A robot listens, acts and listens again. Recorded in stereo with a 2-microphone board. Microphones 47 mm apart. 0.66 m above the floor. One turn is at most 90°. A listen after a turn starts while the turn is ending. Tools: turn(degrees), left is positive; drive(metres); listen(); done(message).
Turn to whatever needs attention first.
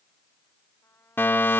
turn(degrees=55)
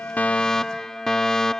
turn(degrees=15)
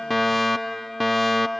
done("Facing the fire alarm.")